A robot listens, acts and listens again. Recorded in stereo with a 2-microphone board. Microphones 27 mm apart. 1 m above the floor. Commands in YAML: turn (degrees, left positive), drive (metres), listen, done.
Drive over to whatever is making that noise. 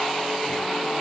listen: true
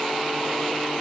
listen: true
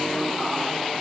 done: "I can't make out anything."